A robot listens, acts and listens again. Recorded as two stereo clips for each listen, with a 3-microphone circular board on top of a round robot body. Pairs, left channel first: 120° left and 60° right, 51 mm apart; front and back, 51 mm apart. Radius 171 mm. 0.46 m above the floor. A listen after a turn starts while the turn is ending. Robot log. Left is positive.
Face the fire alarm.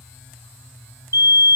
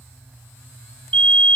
note: The fire alarm: 60° right.
cmd yaw -60
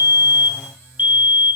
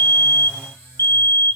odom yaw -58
end: Facing the fire alarm.